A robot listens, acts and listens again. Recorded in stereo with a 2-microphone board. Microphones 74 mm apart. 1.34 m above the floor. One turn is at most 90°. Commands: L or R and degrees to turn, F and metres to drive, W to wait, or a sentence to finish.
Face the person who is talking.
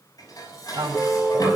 R55
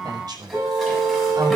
R65
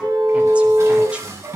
W
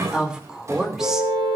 Found it: a woman speaking, straight ahead, 2 to 4 m away.